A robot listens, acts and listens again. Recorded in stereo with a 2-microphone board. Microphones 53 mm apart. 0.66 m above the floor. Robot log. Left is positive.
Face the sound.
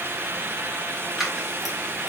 cmd yaw -30
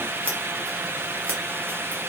cmd idle
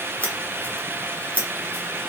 note: So it is at 25° left.
cmd yaw +25
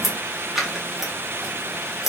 end: Found it: scissors, straight ahead, 1 to 2 m away.